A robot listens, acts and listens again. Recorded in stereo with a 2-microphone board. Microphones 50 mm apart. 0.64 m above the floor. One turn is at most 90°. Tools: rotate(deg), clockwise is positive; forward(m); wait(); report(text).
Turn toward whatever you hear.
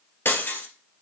rotate(-50)
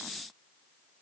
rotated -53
wait()
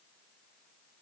report("I heard breaking glass, but can't make it out now. It was about 5° right or 80° left.")